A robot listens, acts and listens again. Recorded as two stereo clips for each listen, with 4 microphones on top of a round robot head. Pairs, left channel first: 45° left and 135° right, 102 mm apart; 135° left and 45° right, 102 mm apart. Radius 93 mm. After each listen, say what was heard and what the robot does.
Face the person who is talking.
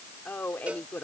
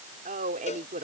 The woman speaking: 35° right. Turn 35° right.
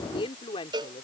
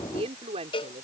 Facing the woman speaking.